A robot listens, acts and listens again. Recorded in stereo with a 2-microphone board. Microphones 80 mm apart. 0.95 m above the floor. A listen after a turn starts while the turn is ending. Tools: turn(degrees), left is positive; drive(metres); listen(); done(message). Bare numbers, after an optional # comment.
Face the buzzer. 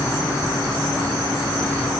listen()
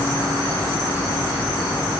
listen()
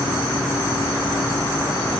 done("I can't make out a buzzer.")